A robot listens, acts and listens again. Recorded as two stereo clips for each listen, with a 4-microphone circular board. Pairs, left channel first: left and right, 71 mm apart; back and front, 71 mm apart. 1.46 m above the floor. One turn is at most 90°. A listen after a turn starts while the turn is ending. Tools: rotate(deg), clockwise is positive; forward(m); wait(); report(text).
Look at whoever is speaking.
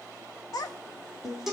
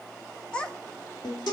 rotate(-90)
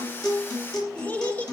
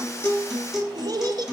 rotate(-25)
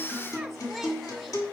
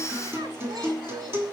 wait()
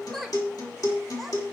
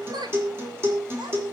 report("Found it: a child speaking, straight ahead, 2 to 4 m away.")